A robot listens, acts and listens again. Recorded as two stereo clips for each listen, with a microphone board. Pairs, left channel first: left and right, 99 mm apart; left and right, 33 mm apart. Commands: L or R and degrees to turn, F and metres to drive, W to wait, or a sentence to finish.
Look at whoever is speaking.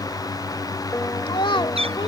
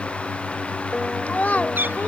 L55
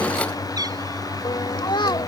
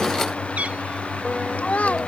L55
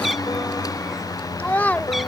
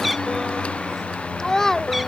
L20
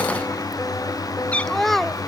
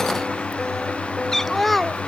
Facing the child speaking.